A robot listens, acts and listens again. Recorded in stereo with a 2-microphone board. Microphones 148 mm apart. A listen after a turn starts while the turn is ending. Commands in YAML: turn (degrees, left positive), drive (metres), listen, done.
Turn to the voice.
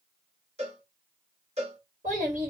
turn: -60
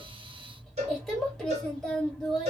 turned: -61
done: "Found it: a child speaking, straight ahead, 1 to 2 m away."